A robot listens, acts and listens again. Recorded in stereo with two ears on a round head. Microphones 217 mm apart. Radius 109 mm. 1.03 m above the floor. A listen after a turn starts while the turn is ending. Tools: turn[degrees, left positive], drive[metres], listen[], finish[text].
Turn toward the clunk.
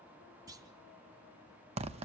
Thought: The clunk: about 15° right or 165° right.
Action: turn[-15]
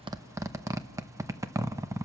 Action: listen[]
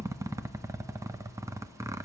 Action: finish[I heard a clunk, but can't make it out now. It was about straight ahead or 150° right.]